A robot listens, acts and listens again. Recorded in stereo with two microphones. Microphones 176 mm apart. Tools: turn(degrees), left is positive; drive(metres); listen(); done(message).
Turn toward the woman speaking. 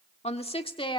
turn(degrees=25)
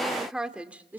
turn(degrees=-10)
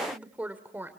turn(degrees=-10)
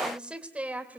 turn(degrees=-10)
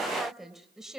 done("Found it: a woman speaking, straight ahead.")